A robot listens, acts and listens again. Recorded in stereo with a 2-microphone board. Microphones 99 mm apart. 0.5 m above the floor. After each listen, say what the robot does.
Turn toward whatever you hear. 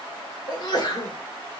Turn 45° left.
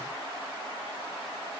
Keep listening.
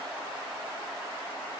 I heard a sneeze, but can't make it out now. It was about straight ahead or 90° left.